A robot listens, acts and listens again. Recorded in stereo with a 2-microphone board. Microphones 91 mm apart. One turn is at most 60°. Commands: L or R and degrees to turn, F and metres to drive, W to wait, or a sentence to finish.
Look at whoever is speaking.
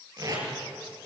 W
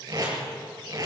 W
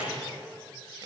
I can't make out anyone speaking to turn to.